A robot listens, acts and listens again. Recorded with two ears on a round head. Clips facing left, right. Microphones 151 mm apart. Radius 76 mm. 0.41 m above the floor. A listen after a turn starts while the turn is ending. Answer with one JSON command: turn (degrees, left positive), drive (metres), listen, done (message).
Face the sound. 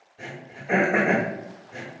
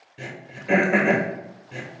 {"turn": -90}
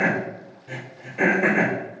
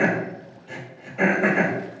{"turn": 10}
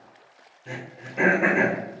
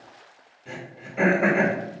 {"done": "Found it: throat clearing, straight ahead."}